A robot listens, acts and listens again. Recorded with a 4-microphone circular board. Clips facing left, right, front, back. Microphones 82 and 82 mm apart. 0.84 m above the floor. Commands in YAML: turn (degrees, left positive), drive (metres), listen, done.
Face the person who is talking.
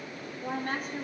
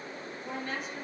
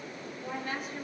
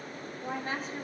turn: 130
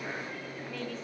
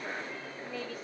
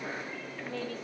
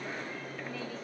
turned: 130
listen: true
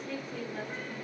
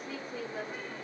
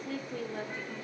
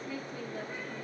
done: "Found it: a woman speaking, straight ahead."